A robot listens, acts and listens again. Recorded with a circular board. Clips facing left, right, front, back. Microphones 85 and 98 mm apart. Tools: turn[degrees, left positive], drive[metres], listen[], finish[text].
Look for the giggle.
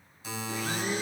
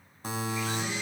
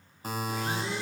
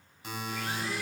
Action: listen[]
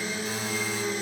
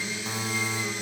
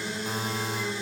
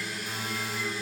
Action: listen[]
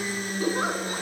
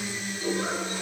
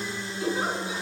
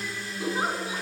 Thought: The giggle: 120° left.
Action: turn[120]
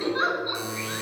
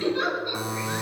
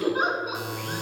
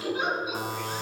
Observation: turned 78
Thought: The giggle is now 40° left.
Action: turn[40]
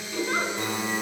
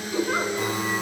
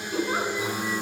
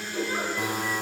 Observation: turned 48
Thought: The giggle is now 10° right.
Action: turn[-10]
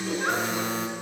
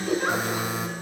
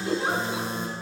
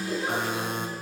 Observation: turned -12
Action: finish[Facing the giggle, 2 to 4 m away.]